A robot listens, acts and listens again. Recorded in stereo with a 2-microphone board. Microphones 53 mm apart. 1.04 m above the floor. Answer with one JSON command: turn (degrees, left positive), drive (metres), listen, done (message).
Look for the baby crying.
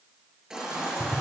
{"turn": -30}
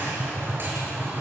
{"listen": true}
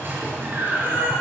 {"turn": -135}
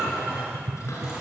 {"turn": -15}
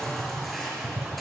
{"done": "Found it: a baby crying, straight ahead."}